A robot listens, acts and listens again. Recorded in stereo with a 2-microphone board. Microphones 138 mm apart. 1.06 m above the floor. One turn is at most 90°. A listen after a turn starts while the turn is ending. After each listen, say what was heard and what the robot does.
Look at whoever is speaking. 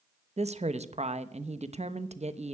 The woman speaking: about 55° right or 125° right. Turn 55° right.
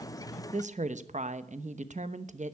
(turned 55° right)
So it is at 70° right. Turn 70° right.
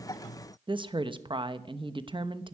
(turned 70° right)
The woman speaking is now 40° right. Turn 40° right.
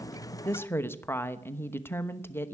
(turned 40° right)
The woman speaking is now 20° left. Turn 20° left.
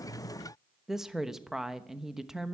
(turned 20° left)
Facing the woman speaking.